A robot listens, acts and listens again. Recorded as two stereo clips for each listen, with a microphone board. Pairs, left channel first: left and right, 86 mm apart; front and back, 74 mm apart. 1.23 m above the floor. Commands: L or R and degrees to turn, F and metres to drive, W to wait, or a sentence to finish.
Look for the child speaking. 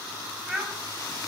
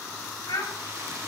Facing the child speaking.